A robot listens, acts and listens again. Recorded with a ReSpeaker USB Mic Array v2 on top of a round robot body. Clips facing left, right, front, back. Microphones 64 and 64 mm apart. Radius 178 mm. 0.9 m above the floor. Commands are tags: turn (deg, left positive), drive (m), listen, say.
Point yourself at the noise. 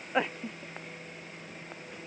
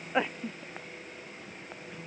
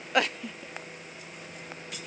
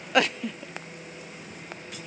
<listen/>
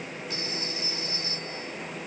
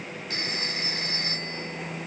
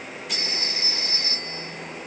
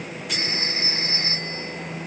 <turn deg="-120"/>
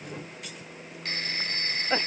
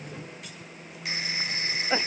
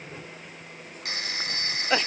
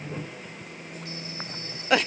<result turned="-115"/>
<turn deg="-10"/>
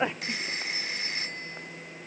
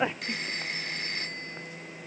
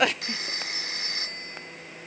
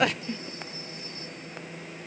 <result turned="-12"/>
<say>Found it: a phone ringing, straight ahead.</say>